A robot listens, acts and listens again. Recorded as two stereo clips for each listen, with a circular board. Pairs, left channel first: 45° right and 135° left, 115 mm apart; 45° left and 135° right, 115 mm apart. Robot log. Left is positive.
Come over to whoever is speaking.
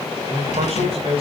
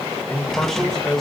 note: The man speaking: 130° left.
cmd yaw +130
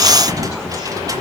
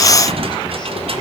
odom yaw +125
cmd idle
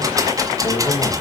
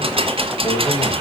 cmd idle
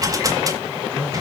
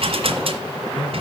end: I heard a man speaking from this way, but can't make it out now. I did not reach it.